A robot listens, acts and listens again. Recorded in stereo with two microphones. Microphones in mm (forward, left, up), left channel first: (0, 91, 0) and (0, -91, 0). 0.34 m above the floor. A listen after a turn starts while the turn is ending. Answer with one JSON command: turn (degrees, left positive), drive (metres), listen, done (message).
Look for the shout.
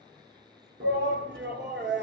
{"turn": -90}
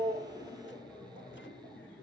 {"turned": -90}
{"done": "Found it: a shout, straight ahead, over 4 m away."}